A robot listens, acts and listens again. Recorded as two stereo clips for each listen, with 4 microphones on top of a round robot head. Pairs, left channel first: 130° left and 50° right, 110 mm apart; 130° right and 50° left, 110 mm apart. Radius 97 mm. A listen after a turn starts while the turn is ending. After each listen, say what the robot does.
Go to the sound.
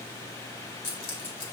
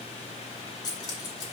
Turn 175° left.
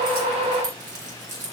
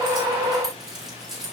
Turn 35° right.
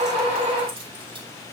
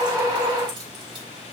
Keep listening.
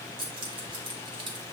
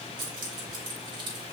Drive 1.0 m forward.
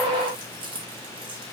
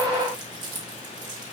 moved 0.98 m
Drive 1.0 m forward.
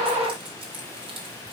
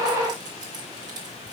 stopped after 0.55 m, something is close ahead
I am next to the keys jangling.